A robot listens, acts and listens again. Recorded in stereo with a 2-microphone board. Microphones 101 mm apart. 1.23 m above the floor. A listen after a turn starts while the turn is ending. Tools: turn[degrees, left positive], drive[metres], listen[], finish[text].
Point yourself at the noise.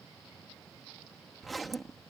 Action: turn[30]
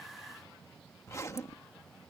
Thought: So it is at 150° left.
Action: turn[150]
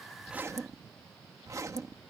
Thought: The zipper is now 30° right.
Action: turn[-30]
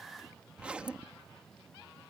Thought: The zipper is now 10° right.
Action: turn[-10]
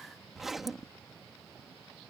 Action: finish[Found it: a zipper, straight ahead.]